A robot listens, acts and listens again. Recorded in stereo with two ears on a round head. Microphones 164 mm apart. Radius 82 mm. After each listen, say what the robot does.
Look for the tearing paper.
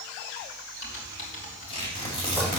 Turn 30° left.
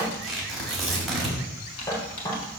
Facing the tearing paper.